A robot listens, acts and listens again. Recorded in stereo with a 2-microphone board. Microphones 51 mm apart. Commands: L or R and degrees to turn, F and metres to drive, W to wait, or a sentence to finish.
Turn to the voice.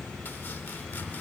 W
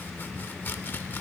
W
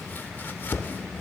I can't make out anyone speaking, only chopping.